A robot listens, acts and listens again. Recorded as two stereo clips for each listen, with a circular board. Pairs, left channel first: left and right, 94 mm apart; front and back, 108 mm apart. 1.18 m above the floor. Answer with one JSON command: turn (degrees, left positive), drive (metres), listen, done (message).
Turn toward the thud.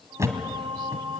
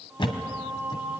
{"turn": -35}
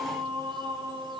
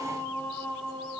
{"done": "Facing where the thud came from. I can't hear it now."}